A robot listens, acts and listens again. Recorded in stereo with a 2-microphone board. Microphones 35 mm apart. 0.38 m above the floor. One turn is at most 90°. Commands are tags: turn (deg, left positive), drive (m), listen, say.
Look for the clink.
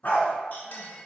<turn deg="60"/>
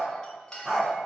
<turn deg="25"/>
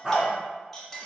<turn deg="10"/>
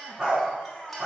<listen/>
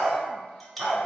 <say>Facing the clink, 1 to 2 m away.</say>